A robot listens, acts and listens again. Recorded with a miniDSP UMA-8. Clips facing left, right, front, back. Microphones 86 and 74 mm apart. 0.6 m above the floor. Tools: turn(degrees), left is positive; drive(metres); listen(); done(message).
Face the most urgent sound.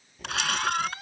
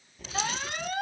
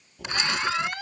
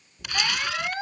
turn(degrees=-120)
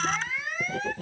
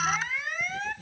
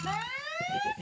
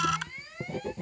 done("Facing the alarm.")